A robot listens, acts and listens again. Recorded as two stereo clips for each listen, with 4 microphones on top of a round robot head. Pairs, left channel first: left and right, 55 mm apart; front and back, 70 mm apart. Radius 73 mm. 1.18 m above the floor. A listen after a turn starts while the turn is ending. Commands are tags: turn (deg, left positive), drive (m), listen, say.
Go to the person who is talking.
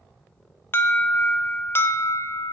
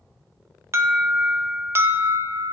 <listen/>
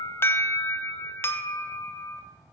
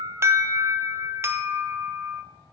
<listen/>
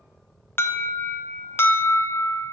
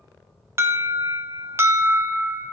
<say>I can't make out anyone speaking to turn to.</say>